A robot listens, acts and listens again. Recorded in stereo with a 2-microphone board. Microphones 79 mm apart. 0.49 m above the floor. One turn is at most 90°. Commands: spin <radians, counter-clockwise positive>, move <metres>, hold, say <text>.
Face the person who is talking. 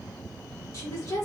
spin 0.87
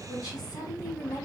spin 1.22
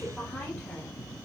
say Found it: a woman speaking, straight ahead.